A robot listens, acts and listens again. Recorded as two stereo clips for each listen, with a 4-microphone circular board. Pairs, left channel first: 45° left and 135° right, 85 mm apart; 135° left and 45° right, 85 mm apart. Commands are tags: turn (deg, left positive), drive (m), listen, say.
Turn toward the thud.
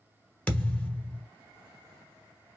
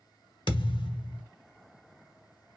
<turn deg="120"/>
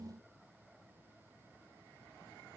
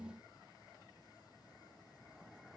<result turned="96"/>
<turn deg="20"/>
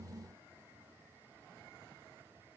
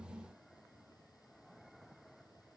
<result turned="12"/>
<turn deg="10"/>
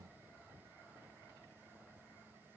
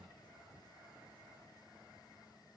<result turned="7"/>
<say>Facing where the thud came from. I can't hear it now.</say>